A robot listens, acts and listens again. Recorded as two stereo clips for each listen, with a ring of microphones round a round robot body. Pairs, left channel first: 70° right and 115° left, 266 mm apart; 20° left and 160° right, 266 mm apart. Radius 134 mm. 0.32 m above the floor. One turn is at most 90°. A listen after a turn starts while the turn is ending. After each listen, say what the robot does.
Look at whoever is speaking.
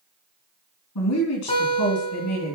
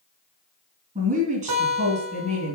Turn 90° right.
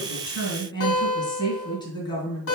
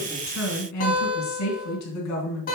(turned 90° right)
Found it: a woman speaking, straight ahead.